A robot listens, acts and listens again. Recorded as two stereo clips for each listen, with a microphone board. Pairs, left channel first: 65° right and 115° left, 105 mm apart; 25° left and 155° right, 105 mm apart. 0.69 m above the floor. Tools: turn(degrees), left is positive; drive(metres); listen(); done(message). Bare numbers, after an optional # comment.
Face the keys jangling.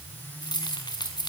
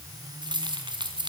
# The keys jangling: 115° right.
turn(-115)
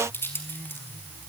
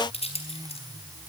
done("Facing the keys jangling.")